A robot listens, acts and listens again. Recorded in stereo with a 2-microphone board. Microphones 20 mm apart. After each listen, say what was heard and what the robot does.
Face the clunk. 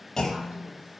The clunk: about 20° left or 160° left. Turn 20° left.
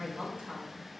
Keep listening.
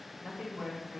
I heard a clunk, but can't make it out now. It was about straight ahead or 140° left.